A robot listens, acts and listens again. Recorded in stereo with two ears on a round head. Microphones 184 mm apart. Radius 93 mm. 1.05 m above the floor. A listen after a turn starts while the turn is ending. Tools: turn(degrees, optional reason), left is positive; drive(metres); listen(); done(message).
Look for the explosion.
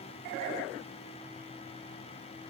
listen()
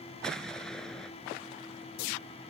turn(degrees=30)
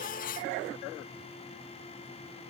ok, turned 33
listen()
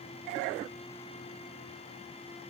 done("I heard an explosion, but can't make it out now. It was about 30° right or 145° left.")